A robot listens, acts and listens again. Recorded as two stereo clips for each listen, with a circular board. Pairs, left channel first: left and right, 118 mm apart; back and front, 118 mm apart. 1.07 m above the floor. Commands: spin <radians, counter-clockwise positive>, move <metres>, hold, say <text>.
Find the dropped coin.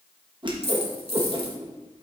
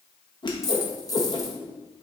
spin 2.18
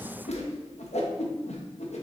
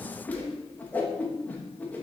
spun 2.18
say Facing where the dropped coin came from. I can't hear it now.